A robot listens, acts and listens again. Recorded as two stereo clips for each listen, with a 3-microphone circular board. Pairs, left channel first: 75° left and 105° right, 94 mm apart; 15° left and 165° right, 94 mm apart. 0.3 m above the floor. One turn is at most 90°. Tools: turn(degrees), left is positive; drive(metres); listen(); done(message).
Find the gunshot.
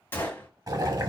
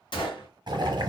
turn(degrees=10)
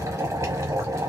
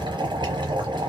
done("Facing where the gunshot came from. I can't hear it now.")